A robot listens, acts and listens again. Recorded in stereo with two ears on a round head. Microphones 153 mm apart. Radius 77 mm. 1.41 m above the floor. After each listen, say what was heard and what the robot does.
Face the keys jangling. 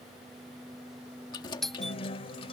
The keys jangling: about 25° left or 155° left. Turn 25° left.
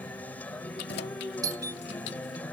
So it is at 105° left. Turn 105° left.
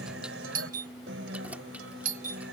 Keep listening.
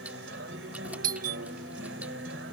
Keep listening.
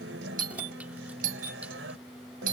I heard keys jangling from this way, but can't make it out now.